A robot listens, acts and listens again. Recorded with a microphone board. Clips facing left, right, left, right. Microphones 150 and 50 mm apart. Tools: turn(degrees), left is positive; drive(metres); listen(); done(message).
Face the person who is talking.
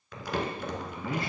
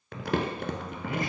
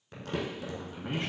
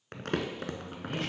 turn(degrees=30)
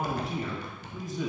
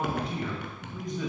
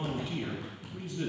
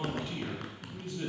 done("Found it: a man speaking, straight ahead, 2 to 4 m away.")